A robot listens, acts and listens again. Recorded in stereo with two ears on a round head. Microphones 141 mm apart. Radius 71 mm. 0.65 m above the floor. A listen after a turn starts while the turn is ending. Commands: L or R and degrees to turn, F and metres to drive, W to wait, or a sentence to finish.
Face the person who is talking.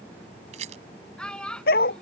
L30
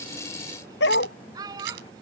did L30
R25
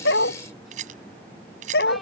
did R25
W
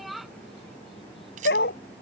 Facing the child speaking.